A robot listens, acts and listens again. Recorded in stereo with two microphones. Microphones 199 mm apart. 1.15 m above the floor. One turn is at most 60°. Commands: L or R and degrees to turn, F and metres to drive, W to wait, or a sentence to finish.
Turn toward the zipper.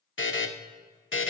W
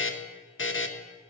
W
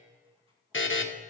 I can't make out a zipper to turn to.